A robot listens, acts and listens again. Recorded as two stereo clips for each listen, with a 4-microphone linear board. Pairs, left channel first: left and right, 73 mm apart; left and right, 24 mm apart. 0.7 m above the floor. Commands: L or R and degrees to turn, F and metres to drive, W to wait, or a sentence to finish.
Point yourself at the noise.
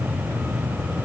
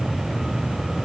W
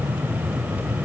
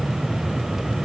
W
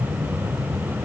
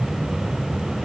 I can't make out anything.